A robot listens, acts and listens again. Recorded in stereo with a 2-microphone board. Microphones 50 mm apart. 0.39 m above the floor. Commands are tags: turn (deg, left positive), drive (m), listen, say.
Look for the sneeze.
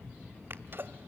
<turn deg="-50"/>
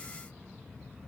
<listen/>
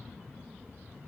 <say>I heard a sneeze, but can't make it out now. It was about straight ahead or 80° right.</say>